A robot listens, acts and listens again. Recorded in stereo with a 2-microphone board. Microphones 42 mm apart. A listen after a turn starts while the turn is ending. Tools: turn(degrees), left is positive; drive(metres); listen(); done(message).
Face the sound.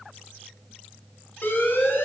turn(degrees=60)
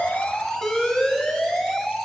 turn(degrees=10)
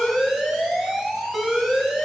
done("Found it: an alarm, straight ahead, 1 to 2 m away.")